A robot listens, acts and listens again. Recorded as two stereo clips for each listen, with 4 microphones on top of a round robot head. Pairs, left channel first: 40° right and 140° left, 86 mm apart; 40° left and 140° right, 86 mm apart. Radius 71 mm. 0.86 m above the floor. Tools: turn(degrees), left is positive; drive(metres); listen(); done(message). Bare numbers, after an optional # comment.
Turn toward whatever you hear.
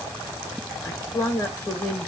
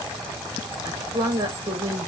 # The woman speaking: 90° right.
turn(-90)
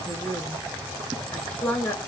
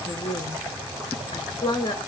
# The woman speaking is now 35° left.
turn(35)
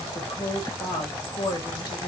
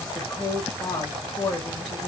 done("Facing the woman speaking.")